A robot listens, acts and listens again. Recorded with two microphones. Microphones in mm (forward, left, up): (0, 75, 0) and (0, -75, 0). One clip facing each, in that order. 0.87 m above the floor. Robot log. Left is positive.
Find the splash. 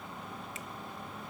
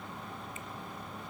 cmd idle
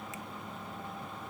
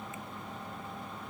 cmd idle
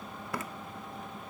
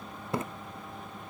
note: The splash: about 25° right or 155° right.
cmd yaw -25
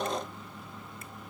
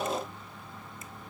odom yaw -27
cmd idle
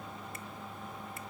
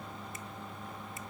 end: I heard a splash, but can't make it out now. It was about straight ahead or 125° right.